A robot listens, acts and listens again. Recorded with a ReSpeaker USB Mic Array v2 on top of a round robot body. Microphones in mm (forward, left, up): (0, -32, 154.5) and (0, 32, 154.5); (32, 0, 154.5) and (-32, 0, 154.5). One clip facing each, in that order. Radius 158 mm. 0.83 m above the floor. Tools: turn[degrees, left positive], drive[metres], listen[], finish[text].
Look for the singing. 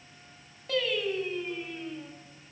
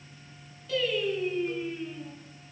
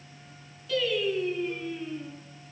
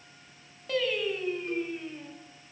Thought: The singing: 140° right.
Action: turn[-140]
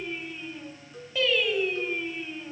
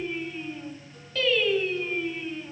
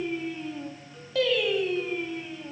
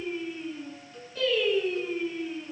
Thought: The singing is now 15° right.
Action: turn[-15]
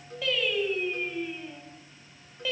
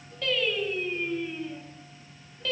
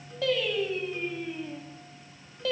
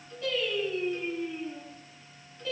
Thought: The singing is now 10° right.
Action: turn[-10]
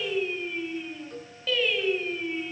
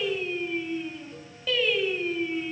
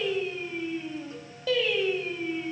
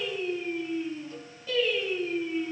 Action: finish[Found it: singing, straight ahead, over 4 m away.]